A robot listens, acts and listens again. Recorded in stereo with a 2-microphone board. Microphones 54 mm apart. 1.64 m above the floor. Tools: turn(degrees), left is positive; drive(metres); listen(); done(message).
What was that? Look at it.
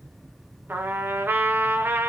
turn(degrees=-40)
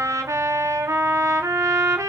turn(degrees=-95)
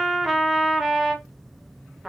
done("Found it: a trumpet, straight ahead.")